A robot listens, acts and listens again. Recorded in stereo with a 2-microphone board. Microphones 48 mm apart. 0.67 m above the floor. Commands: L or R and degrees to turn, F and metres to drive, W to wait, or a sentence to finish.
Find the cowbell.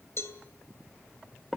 L65
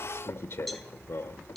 Found it: a cowbell, straight ahead, 2 to 4 m away.